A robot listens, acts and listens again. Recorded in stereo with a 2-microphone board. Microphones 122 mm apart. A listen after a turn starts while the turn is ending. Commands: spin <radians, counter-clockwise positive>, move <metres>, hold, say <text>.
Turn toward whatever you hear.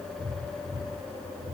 hold
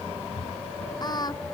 spin 0.61
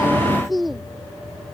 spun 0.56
say Found it: singing, straight ahead.